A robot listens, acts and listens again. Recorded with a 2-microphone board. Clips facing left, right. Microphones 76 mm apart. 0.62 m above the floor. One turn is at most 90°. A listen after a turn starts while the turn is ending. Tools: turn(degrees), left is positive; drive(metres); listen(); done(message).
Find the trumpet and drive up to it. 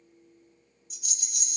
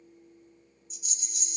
listen()
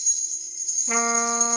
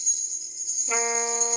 turn(degrees=35)
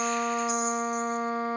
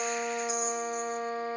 turn(degrees=90)
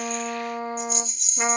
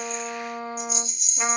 turn(degrees=30)
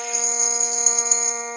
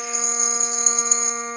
drive(metres=1.0)
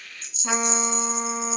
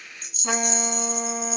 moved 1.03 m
drive(metres=1.0)
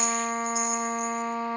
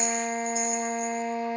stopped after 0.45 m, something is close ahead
turn(degrees=-10)
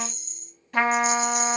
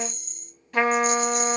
done("I am next to the trumpet.")